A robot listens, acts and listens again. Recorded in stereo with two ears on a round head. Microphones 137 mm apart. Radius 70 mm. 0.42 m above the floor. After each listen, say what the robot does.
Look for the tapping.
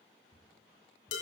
Turn 30° right.
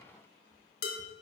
Turn 20° left.
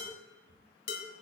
Found it: tapping, straight ahead, 2 to 4 m away.